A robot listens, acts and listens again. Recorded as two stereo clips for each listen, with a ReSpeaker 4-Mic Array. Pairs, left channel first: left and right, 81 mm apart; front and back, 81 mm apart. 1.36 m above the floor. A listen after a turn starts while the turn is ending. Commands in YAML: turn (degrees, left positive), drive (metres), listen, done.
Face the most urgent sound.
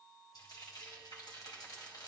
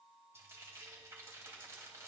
listen: true
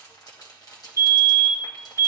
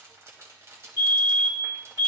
turn: 40
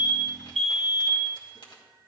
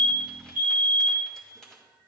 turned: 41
done: "Found it: a fire alarm, straight ahead."